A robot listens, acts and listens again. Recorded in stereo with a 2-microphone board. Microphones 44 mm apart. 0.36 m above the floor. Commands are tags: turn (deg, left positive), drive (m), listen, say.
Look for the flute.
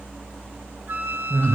<turn deg="-50"/>
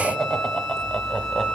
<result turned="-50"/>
<say>Facing the flute.</say>